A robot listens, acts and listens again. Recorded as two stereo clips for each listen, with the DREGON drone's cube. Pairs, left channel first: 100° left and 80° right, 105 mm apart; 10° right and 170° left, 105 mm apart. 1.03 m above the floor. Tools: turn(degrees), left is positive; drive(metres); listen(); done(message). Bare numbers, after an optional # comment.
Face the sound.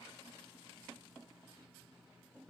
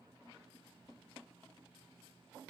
listen()
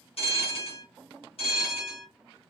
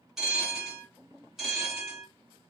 # The bell: 85° left.
turn(85)
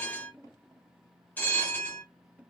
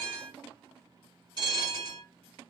# The bell is now 30° left.
turn(30)
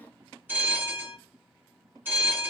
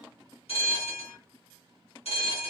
# The bell is now 10° right.
turn(-10)
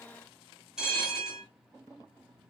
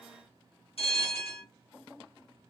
done("Facing the bell, 1 to 2 m away.")